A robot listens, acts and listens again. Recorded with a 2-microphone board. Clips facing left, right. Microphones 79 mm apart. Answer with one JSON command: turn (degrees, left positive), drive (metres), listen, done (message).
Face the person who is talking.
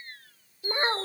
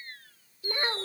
{"turn": 30}
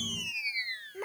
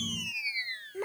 {"done": "Found it: a child speaking, straight ahead."}